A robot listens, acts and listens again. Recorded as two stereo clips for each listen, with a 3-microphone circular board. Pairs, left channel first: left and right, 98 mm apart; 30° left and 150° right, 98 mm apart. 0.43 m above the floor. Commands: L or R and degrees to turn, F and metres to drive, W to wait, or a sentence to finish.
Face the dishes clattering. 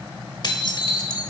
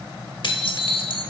L55
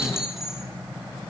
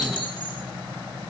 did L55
Found it: dishes clattering, straight ahead.